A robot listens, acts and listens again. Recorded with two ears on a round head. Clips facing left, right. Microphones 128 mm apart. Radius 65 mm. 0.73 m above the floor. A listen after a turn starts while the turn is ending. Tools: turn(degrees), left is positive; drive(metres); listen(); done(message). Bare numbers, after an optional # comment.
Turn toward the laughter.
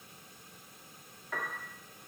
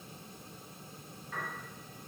listen()
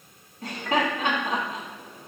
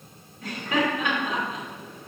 # The laughter: about 25° left or 155° left.
turn(25)
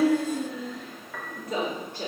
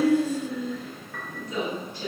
# So it is at 130° left.
turn(130)
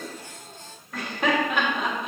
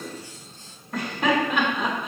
done("Facing the laughter.")